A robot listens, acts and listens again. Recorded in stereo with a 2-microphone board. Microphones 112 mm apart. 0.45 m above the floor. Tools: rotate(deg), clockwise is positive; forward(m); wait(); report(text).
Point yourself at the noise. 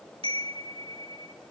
rotate(60)
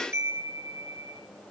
rotate(25)
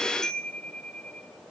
report("Found it: a chime, straight ahead.")